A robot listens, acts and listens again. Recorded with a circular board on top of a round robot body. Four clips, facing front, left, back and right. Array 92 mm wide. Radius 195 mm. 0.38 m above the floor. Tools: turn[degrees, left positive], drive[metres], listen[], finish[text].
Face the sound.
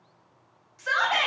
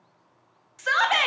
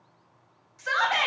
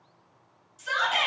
Thought: The shout: 90° left.
Action: turn[90]
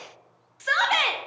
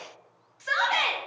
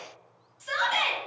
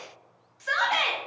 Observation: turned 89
Action: finish[Found it: a shout, straight ahead, 1 to 2 m away.]